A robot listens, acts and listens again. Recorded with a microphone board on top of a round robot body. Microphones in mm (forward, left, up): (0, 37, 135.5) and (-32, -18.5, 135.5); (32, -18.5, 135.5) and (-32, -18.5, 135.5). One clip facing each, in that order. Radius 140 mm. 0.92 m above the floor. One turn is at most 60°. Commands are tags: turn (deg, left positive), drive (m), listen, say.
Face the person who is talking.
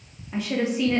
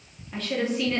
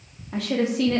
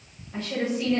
<turn deg="-20"/>
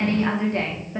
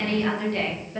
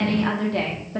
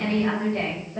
<turn deg="-10"/>
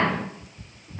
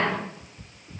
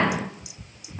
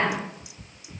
<say>Facing the woman speaking, 2 to 4 m away.</say>